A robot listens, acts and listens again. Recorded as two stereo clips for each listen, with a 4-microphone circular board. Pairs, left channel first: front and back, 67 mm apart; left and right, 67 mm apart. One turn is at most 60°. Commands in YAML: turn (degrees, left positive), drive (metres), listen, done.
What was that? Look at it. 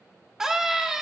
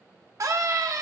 turn: -60
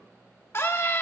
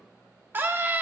turn: -40
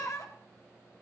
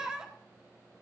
turn: -15
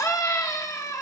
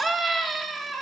done: "Found it: a scream, straight ahead."